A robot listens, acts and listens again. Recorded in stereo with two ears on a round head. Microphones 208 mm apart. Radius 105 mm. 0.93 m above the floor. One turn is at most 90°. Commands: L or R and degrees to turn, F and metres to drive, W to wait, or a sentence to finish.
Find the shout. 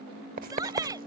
R15
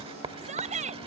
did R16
R90
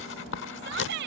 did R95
R50
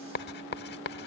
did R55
W
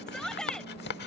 Facing the shout.